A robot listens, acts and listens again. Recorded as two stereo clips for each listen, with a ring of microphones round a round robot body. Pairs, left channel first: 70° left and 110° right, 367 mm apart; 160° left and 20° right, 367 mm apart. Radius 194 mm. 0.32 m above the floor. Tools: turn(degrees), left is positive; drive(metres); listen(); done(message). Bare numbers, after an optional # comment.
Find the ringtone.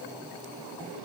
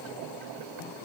listen()
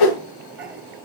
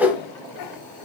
listen()
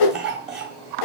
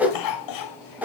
done("I can't make out a ringtone to turn to.")